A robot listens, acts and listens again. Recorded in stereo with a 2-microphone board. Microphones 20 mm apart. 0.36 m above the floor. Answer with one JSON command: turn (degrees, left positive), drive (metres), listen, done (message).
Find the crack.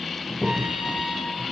{"turn": -30}
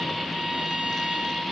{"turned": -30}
{"listen": true}
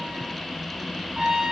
{"done": "I heard a crack, but can't make it out now. It was about straight ahead or 120° right."}